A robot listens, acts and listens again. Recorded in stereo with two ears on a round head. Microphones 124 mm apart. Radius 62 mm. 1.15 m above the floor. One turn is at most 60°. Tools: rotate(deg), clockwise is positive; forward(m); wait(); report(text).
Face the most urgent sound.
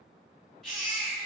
rotate(-30)
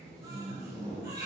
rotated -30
rotate(25)
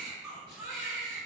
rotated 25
report("Facing the baby crying, 1 to 2 m away.")